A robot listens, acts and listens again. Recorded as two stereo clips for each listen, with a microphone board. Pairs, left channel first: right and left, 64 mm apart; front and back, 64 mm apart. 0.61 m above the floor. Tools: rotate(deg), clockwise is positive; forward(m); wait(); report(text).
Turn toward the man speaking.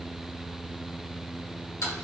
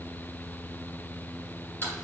wait()
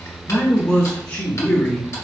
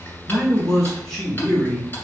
rotate(60)
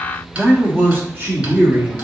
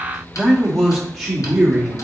rotate(-100)
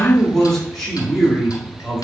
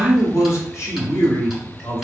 rotate(10)
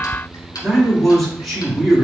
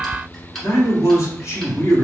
report("Found it: a man speaking, straight ahead, 1 to 2 m away.")